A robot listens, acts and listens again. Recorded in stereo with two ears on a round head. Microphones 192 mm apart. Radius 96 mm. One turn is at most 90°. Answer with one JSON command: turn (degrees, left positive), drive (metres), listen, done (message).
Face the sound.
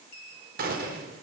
{"turn": -45}
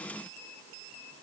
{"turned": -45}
{"listen": true}
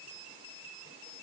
{"done": "I heard a gunshot, but can't make it out now. It was about straight ahead or 90° right."}